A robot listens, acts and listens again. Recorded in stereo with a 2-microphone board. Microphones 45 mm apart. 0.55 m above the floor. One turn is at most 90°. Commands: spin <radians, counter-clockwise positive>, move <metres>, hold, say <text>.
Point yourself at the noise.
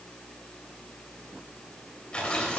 spin 0.44
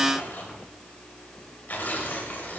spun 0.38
spin 1.57
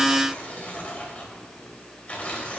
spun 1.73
spin 0.61
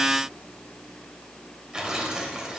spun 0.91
spin -0.26
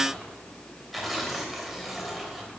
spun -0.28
say Found it: tearing paper, straight ahead, 2 to 4 m away.